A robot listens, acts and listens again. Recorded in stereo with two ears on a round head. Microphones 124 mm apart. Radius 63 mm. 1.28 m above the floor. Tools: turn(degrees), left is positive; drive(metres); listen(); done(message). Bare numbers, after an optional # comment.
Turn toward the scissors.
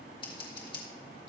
# The scissors: about 35° left or 145° left.
turn(35)
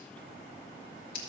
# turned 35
# So it is at 105° left.
turn(105)
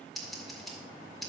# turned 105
done("Facing the scissors.")